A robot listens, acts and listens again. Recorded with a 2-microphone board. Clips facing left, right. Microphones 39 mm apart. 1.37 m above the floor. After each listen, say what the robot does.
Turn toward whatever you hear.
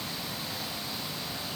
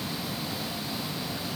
Keep listening.
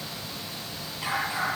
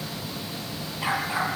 Turn 15° right.
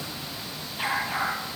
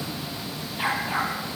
Facing the dog barking.